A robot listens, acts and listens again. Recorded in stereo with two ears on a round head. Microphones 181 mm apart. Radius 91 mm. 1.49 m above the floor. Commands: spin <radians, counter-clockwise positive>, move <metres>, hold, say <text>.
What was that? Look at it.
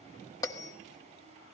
spin 0.26
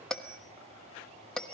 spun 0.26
say Found it: a bell, straight ahead, 1 to 2 m away.